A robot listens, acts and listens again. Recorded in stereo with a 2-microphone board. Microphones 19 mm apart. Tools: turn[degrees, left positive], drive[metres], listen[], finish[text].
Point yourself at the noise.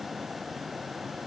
Action: listen[]
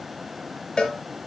Thought: The cowbell: about 45° left or 135° left.
Action: turn[45]
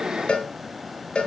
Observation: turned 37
Thought: So it is at 95° left.
Action: turn[95]
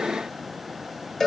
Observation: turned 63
Thought: The cowbell is now 35° left.
Action: turn[35]
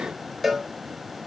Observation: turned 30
Action: finish[Found it: a cowbell, straight ahead.]